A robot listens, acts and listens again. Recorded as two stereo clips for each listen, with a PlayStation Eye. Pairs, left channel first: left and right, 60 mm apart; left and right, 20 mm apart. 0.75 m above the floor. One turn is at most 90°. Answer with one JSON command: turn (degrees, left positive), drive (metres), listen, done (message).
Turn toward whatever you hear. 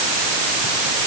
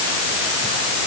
{"listen": true}
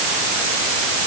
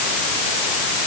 {"listen": true}
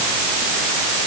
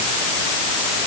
{"done": "I can't make out anything."}